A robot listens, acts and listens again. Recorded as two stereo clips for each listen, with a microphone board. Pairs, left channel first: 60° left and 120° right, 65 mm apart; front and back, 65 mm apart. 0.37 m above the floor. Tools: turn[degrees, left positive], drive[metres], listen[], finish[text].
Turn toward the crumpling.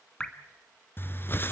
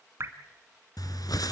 Thought: The crumpling: 10° left.
Action: turn[10]
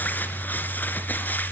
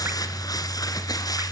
Action: finish[Found it: crumpling, straight ahead.]